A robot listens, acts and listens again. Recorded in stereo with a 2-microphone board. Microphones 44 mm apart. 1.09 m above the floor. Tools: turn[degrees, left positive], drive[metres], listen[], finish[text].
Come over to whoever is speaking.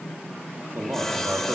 Thought: The man speaking: about 65° right or 115° right.
Action: turn[-65]
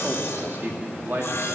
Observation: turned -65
Thought: So it is at 50° right.
Action: turn[-50]
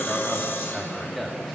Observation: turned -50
Action: drive[1.0]
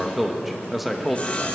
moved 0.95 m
Action: drive[1.0]
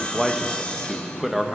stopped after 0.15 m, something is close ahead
Action: finish[I am next to the man speaking.]